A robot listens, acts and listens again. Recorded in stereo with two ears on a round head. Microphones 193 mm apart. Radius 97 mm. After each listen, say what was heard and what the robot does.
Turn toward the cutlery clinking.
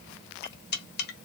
The cutlery clinking: about 50° left or 130° left. Turn 50° left.
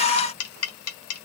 So it is at 80° left. Turn 80° left.
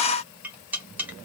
The cutlery clinking is now 10° right. Turn 10° right.
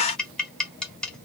Found it: cutlery clinking, straight ahead, 1 to 2 m away.